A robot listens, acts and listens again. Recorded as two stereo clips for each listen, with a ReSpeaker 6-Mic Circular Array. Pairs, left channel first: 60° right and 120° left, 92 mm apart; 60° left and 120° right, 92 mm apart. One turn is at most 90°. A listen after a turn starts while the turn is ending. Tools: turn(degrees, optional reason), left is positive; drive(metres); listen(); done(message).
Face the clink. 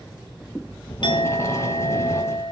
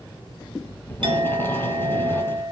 turn(degrees=-90, reason="The clink: 90° right.")
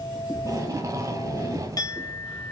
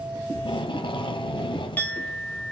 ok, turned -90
turn(degrees=-15, reason="The clink is now 15° right.")
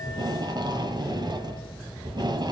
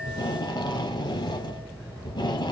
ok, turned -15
listen()
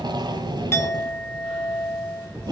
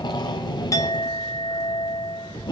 done("Facing the clink, 1 to 2 m away.")